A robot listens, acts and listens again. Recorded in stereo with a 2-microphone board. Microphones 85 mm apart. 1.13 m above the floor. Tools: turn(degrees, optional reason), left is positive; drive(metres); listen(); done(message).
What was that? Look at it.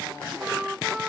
turn(degrees=-30)
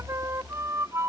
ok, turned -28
turn(degrees=-150, reason="So it is at 150° right.")
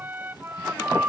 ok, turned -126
turn(degrees=-20, reason="The flute is now 20° right.")
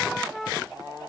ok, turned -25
done("Facing the flute.")